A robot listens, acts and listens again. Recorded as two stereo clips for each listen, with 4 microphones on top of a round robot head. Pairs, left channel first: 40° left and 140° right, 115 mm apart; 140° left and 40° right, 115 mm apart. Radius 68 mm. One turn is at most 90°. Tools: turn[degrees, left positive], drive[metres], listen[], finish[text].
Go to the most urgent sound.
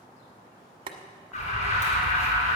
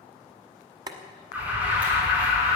Thought: The alarm: 35° left.
Action: turn[35]
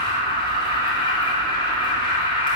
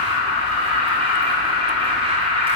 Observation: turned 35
Action: drive[1.0]
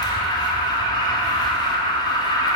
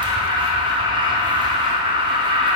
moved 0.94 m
Action: drive[1.0]
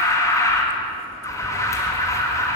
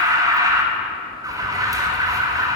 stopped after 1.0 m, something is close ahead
Action: finish[Arrived at the alarm, straight ahead.]